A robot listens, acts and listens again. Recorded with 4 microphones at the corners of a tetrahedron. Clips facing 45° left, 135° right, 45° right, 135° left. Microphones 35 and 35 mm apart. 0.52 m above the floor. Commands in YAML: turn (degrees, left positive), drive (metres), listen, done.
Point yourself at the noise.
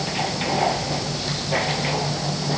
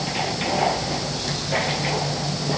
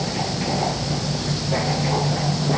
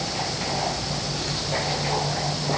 listen: true
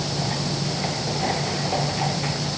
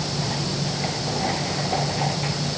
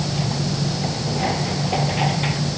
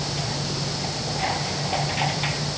listen: true
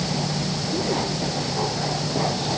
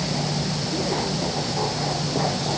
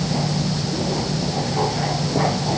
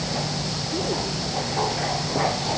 done: "I can't make out anything."